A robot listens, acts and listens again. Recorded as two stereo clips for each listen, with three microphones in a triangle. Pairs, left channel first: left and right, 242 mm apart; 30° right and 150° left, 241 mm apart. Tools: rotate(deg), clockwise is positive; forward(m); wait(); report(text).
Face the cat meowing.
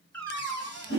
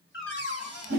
rotate(-10)
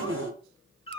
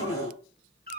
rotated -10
rotate(-25)
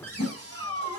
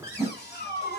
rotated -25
rotate(-20)
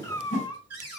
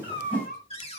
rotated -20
rotate(-20)
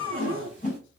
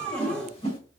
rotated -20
rotate(-10)
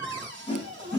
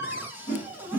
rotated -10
rotate(-10)
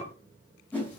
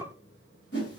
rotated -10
report("Facing the cat meowing, 1 to 2 m away.")